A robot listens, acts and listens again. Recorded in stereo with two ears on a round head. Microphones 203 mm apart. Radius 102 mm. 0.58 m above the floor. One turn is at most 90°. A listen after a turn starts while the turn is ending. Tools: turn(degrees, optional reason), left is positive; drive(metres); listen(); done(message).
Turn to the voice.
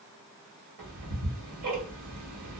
listen()
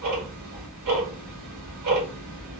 listen()
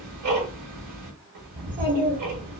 turn(degrees=-35, reason="The child speaking: about 35° right or 145° right.")
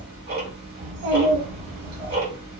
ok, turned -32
turn(degrees=-90, reason="So it is at 110° right.")
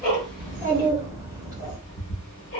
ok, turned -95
turn(degrees=-15, reason="The child speaking is now 15° right.")
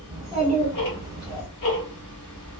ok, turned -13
done("Facing the child speaking.")